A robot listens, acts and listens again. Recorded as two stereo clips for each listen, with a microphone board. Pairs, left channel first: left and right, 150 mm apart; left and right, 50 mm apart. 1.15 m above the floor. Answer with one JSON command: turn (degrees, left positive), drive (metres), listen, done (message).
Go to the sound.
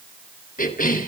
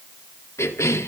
{"turn": 75}
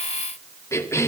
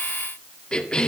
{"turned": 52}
{"turn": 20}
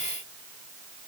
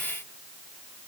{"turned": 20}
{"listen": true}
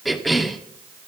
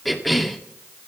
{"drive": 1.0}
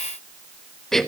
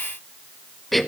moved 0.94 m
{"drive": 1.0}
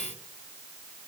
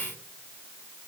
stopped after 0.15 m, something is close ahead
{"listen": true}
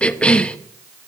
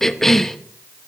{"done": "I am next to the cough."}